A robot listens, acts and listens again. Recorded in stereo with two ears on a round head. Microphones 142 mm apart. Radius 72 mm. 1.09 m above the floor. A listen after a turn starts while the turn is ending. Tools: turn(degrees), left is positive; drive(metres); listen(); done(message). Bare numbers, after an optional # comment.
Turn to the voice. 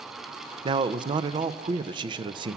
# The man speaking: about 30° right or 150° right.
turn(-30)
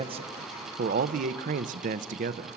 # So it is at 115° right.
turn(-115)
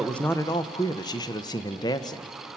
# The man speaking is now 30° left.
turn(30)
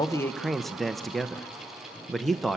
done("Found it: a man speaking, straight ahead, under 1 m away.")